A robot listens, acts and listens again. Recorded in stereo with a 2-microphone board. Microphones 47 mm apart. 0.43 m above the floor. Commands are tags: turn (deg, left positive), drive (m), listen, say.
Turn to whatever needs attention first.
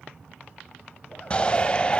<turn deg="25"/>
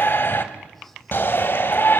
<turn deg="125"/>
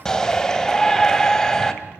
<turn deg="10"/>
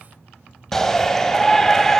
<turn deg="10"/>
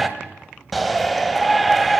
<say>Found it: a shout, straight ahead, 2 to 4 m away.</say>